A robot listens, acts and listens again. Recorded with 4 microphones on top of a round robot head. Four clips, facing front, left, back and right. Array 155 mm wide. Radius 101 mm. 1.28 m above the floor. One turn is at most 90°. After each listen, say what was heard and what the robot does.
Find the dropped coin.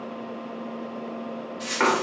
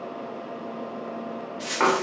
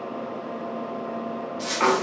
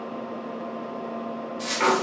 The dropped coin: 145° right. Turn 90° right.
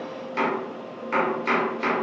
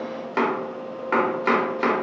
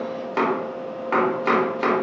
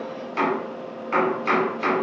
Nothing new. It was at 55° right. Turn 55° right.
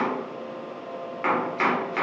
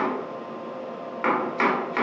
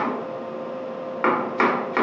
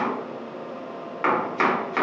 I heard a dropped coin from this way, but can't make it out now.